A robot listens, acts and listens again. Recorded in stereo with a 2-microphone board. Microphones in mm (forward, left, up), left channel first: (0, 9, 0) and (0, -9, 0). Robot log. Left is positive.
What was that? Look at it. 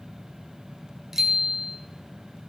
note: The bicycle bell: about 25° right or 155° right.
cmd yaw -25
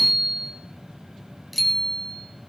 end: Facing the bicycle bell.